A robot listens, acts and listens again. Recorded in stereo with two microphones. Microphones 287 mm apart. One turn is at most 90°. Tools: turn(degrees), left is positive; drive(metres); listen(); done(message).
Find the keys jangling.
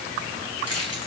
turn(degrees=65)
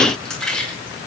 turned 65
done("Facing the keys jangling.")